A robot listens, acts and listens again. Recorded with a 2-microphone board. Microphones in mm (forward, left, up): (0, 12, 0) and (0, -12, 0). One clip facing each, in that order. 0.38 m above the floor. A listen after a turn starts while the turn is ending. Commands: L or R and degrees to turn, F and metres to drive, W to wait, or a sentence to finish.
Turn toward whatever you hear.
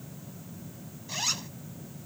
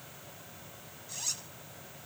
L45
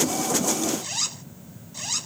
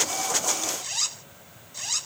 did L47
Found it: a zipper, straight ahead.